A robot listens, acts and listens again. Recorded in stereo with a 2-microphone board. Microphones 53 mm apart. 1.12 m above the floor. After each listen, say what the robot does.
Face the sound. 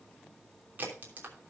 Turn 35° right.
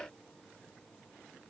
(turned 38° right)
Keep listening.
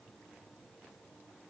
I heard a crack, but can't make it out now. It was about straight ahead or 105° right.